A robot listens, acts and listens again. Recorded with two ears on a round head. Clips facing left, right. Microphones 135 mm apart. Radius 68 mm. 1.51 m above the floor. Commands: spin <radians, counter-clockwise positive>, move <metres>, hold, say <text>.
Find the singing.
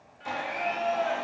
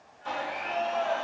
spin 1.57
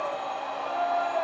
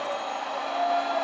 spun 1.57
say Facing the singing.